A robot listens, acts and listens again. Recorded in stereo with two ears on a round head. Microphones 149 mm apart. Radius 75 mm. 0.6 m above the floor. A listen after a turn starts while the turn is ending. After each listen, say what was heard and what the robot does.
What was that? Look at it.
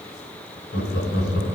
The laughter: about 60° left or 120° left. Turn 60° left.
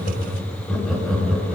Facing the laughter, 2 to 4 m away.